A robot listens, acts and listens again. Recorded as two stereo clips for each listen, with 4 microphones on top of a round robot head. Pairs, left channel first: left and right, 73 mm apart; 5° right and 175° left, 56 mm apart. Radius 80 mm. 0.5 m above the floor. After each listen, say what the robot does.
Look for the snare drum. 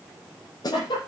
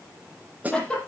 Turn 115° left.
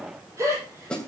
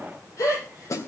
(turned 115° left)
Turn 10° left.
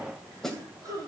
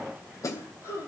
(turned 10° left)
Facing the snare drum.